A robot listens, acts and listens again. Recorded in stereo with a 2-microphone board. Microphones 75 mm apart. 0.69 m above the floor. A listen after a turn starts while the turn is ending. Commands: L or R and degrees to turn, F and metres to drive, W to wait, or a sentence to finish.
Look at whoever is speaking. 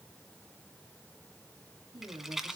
R90
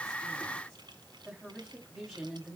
Facing the woman speaking, over 4 m away.